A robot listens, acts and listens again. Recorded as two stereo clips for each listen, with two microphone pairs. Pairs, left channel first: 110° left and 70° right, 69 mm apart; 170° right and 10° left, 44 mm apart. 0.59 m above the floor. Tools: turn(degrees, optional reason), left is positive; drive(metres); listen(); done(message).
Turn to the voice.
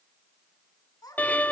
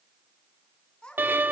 turn(degrees=125, reason="The child speaking: 125° left.")
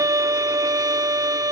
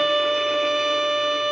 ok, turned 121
listen()
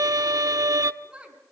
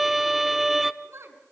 done("Facing the child speaking.")